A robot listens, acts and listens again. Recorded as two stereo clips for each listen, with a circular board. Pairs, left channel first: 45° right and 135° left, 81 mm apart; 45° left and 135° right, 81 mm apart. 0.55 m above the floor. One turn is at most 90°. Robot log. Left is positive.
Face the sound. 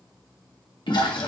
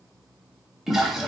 note: The toilet flushing: 50° right.
cmd yaw -50
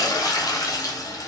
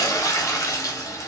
end: Found it: a toilet flushing, straight ahead.